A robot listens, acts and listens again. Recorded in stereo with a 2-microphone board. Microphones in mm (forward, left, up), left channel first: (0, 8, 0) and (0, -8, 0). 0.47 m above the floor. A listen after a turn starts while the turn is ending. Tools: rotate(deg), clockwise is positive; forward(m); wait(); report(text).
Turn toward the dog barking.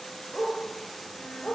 rotate(-55)
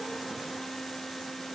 wait()
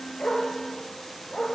rotate(-55)
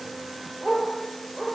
report("Facing the dog barking, over 4 m away.")